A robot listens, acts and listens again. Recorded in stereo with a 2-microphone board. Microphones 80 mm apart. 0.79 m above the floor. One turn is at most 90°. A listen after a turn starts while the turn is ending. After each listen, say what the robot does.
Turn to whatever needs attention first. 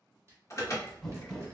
Turn 40° left.
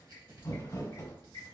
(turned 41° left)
Turn 90° left.
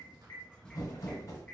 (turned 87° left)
Turn 15° left.
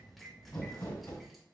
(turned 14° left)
Keep listening.
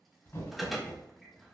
Facing the alarm, 1 to 2 m away.